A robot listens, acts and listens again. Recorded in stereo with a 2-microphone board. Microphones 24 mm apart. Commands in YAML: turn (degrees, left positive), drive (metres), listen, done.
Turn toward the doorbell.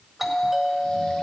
turn: -30
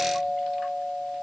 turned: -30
turn: -135
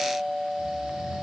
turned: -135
turn: 15
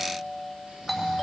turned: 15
done: "Facing the doorbell."